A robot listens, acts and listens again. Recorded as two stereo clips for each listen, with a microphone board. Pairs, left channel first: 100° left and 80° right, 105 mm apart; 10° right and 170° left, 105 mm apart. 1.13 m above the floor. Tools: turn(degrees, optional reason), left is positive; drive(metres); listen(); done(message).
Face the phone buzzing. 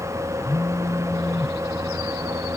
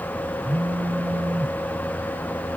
turn(degrees=-165, reason="The phone buzzing: 165° right.")
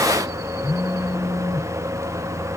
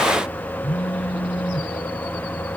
turn(degrees=30, reason="The phone buzzing is now 30° left.")
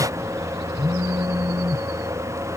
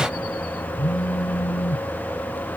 turn(degrees=-15, reason="The phone buzzing is now 15° right.")
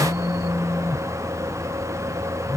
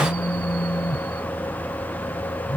done("Facing the phone buzzing.")